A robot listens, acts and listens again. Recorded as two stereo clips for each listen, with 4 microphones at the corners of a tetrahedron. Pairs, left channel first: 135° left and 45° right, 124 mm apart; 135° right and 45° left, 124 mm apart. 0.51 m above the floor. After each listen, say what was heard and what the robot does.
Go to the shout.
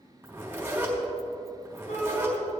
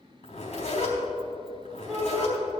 The shout: 135° left. Turn 135° left.
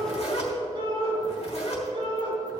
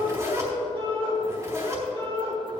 Drive 1.0 m forward.
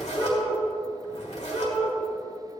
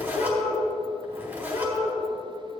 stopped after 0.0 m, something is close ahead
The shout is now 10° left. Turn 10° left.
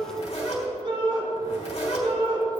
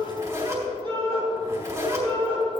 Blocked. The shout is further on, straight ahead.